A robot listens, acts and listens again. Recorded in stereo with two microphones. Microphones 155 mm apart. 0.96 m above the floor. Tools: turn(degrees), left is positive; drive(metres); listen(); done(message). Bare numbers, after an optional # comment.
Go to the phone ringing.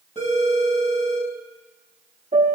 # The phone ringing: about 50° left or 130° left.
turn(50)
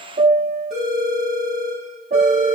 drive(1.0)
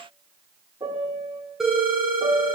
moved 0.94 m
drive(1.0)
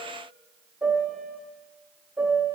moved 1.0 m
listen()
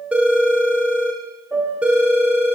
# The phone ringing is now 10° right.
turn(-10)
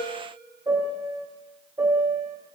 listen()
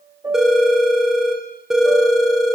drive(1.0)
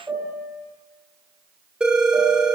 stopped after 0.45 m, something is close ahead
done("Arrived at the phone ringing, straight ahead.")